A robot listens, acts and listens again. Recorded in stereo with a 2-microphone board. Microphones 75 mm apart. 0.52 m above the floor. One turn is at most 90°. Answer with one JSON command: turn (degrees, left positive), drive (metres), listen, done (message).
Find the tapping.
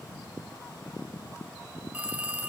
{"listen": true}
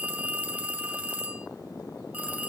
{"listen": true}
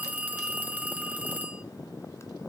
{"done": "I can't make out tapping to turn to."}